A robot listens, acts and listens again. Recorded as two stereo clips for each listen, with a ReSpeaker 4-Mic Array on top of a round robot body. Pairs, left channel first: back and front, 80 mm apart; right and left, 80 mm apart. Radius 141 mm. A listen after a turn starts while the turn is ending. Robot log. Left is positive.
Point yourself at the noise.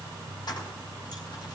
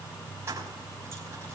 note: The keys jangling: 150° left.
cmd yaw +150
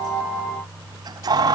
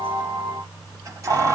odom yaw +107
note: The keys jangling is now 40° left.
cmd yaw +40
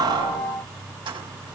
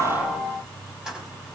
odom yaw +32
end: Facing the keys jangling.